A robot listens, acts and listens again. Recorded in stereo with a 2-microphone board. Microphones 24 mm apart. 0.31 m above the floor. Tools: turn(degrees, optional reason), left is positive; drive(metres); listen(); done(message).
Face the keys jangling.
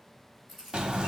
turn(degrees=-30)
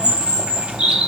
listen()
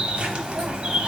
listen()
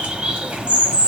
done("I heard keys jangling, but can't make it out now. It was about 25° left or 145° right.")